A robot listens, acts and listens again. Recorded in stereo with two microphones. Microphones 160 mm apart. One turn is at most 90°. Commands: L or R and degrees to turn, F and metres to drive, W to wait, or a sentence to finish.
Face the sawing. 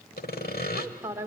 L90
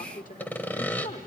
L10
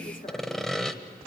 Found it: sawing, straight ahead, 1 to 2 m away.